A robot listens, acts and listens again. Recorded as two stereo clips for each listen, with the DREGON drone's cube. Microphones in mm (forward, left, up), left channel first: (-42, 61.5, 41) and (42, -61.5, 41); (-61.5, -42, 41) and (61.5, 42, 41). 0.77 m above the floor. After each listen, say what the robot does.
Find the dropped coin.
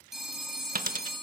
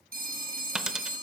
Turn 50° right.
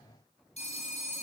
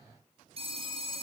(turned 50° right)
Facing where the dropped coin came from. I can't hear it now.